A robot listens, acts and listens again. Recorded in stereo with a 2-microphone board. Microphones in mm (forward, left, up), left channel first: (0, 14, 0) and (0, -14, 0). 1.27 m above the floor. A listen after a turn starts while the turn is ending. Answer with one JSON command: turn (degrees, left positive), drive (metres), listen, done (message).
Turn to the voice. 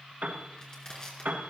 {"listen": true}
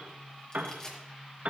{"listen": true}
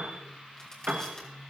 {"done": "I can't make out anyone speaking to turn to."}